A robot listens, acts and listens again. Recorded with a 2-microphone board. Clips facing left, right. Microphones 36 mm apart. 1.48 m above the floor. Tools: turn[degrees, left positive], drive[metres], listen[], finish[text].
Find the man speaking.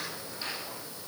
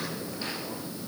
Action: listen[]
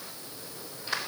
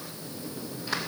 Action: listen[]
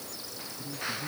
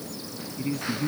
Action: turn[-90]
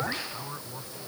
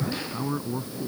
Thought: So it is at 15° right.
Action: turn[-15]
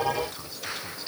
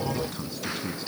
Action: finish[Facing the man speaking.]